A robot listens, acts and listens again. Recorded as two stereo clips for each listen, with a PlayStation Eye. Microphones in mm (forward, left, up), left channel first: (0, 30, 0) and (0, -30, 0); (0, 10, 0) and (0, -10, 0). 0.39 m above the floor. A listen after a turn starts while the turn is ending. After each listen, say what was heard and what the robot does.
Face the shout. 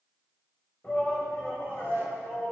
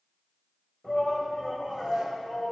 The shout: about 25° left or 155° left. Turn 25° left.
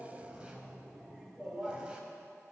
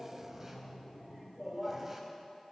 Found it: a shout, straight ahead.